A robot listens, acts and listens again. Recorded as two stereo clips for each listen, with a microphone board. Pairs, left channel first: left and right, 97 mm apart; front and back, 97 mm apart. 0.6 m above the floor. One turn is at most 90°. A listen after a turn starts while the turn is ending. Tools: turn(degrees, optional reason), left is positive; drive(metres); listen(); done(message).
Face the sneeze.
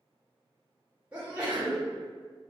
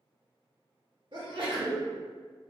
turn(degrees=-90, reason="The sneeze: 165° right.")
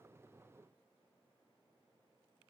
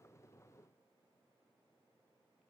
turn(degrees=-75, reason="Nothing new. It was at 75° right.")
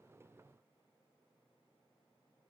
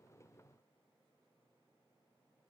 done("Facing where the sneeze came from. I can't hear it now.")